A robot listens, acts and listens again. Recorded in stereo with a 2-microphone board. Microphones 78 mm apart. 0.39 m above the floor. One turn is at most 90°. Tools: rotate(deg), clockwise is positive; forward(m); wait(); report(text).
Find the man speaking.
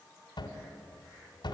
wait()
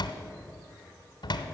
wait()
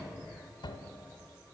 report("I can't make out a man speaking, only a cupboard door.")